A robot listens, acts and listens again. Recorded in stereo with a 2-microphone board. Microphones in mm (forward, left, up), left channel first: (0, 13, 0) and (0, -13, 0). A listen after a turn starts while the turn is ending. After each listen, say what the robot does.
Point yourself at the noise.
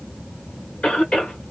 Turn 50° left.
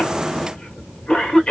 Turn 65° left.
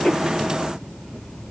Keep listening.
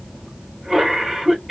Facing the cough, 1 to 2 m away.